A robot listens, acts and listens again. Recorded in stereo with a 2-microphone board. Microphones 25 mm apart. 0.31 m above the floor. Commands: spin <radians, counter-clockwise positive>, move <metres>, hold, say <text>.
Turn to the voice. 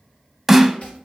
hold
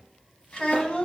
spin 0.79
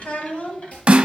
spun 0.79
spin 0.87
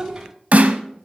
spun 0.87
spin -0.17
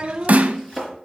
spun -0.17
spin -0.52
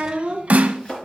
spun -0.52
spin -0.70
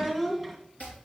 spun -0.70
say Found it: a child speaking, straight ahead, 1 to 2 m away.